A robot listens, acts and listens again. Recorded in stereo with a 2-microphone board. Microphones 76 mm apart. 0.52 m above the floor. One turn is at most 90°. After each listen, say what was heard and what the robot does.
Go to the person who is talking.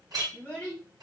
The child speaking: about 20° left or 160° left. Turn 20° left.
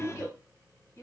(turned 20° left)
So it is at 140° left. Turn 90° left.
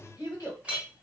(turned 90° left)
The child speaking is now 65° left. Turn 65° left.
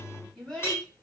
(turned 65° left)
The child speaking is now 10° left. Turn 10° left.
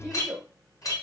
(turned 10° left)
Drive 1.0 m forward.
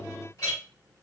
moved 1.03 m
Keep listening.
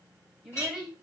The child speaking is now 10° right. Turn 10° right.
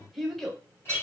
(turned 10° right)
Drive 1.0 m forward.
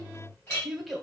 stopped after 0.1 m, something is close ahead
Arrived at the child speaking, straight ahead.